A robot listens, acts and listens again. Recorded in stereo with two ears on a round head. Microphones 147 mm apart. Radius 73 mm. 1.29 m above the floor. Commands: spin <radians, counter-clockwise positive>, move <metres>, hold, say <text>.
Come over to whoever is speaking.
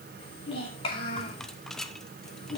spin 0.52
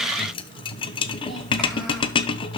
hold
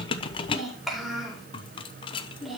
move 1.0
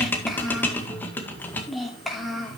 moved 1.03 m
move 1.0
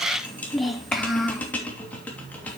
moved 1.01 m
move 1.0
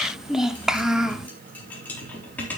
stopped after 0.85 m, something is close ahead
say Arrived at the child speaking, straight ahead.